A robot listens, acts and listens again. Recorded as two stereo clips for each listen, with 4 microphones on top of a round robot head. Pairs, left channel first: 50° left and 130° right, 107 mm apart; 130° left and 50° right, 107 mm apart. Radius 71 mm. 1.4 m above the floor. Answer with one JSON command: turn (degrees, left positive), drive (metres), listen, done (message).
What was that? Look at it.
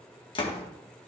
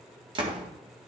{"done": "Found it: a door slam, straight ahead, 1 to 2 m away."}